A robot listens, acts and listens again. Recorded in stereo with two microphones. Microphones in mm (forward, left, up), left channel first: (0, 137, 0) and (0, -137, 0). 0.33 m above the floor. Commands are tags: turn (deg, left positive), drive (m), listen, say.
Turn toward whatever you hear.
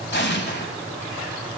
<turn deg="40"/>
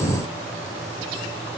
<listen/>
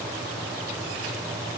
<say>I heard an explosion, but can't make it out now. It was about straight ahead or 100° left.</say>